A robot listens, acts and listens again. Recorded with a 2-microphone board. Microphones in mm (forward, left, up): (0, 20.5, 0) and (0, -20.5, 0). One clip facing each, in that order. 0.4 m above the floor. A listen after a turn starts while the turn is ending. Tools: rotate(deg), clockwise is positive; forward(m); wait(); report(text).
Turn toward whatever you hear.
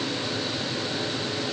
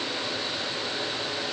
wait()
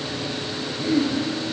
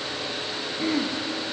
rotate(90)
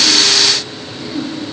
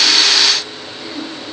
report("Facing the throat clearing.")